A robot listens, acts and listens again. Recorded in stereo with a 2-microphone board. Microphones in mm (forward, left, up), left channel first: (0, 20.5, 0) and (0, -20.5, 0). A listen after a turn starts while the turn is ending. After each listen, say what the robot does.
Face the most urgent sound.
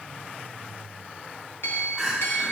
Turn 30° left.
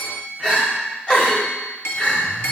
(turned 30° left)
Turn 145° left.
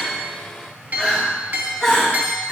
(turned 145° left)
Facing the crying.